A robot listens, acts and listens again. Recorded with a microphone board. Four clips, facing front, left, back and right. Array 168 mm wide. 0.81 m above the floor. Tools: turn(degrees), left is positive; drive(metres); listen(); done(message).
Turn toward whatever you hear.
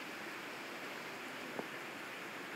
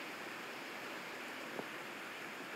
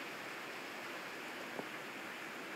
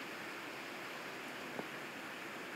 listen()
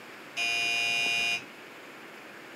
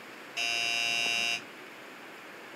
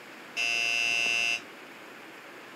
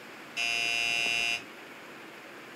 turn(degrees=155)
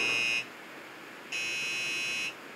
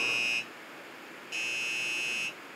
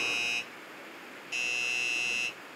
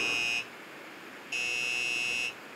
turn(degrees=20)
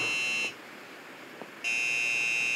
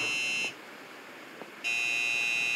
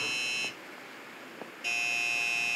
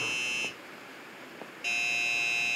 turn(degrees=-10)
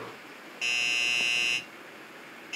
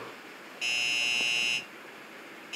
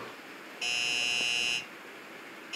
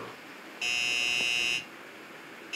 done("Facing the doorbell.")